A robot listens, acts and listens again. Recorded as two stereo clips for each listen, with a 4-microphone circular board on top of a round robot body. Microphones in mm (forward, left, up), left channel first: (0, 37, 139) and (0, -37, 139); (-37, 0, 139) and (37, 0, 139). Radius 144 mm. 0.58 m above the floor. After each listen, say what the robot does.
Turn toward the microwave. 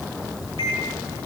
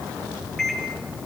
Turn 95° left.
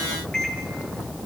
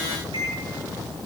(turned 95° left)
Turn 10° left.
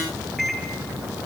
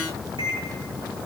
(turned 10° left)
Found it: a microwave, straight ahead, over 4 m away.